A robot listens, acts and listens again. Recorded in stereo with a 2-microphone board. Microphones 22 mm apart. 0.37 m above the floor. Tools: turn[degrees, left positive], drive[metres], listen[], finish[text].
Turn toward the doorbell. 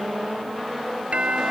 Thought: The doorbell: about 65° right or 115° right.
Action: turn[-65]
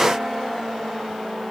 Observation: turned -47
Action: listen[]
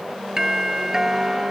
Thought: So it is at 20° right.
Action: turn[-20]
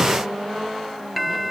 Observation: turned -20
Action: finish[Facing the doorbell.]